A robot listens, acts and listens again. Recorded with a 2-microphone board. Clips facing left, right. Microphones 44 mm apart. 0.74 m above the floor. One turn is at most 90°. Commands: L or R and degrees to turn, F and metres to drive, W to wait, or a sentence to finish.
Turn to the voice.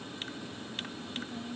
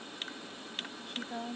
R90
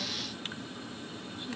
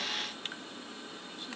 W
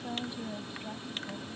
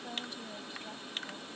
L15
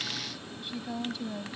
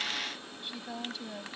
Found it: a woman speaking, straight ahead.